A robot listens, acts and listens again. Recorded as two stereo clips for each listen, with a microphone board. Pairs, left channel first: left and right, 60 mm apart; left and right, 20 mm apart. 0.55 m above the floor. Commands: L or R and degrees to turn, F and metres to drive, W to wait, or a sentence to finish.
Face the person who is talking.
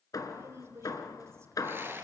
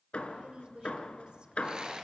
R50
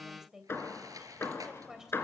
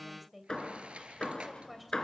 R10
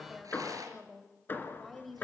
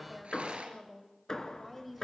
Facing the woman speaking.